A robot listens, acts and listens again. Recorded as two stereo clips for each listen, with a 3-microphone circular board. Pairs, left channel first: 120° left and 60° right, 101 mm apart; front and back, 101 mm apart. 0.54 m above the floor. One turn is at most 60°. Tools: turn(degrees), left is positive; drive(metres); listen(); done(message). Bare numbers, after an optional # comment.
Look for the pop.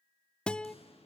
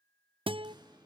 # The pop: 135° left.
turn(60)
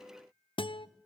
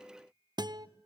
# Nothing new. It was at 75° left.
turn(60)
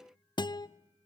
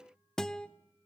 # Nothing new. It was at 15° left.
turn(15)
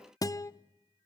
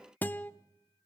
done("I heard a pop from this way, but can't make it out now.")